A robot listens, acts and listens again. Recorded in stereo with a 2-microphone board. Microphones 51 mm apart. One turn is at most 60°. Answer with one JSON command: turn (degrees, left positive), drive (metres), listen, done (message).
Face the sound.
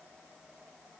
{"listen": true}
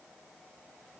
{"listen": true}
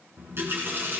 {"turn": -50}
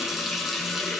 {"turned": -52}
{"done": "Found it: a running tap, straight ahead, 2 to 4 m away."}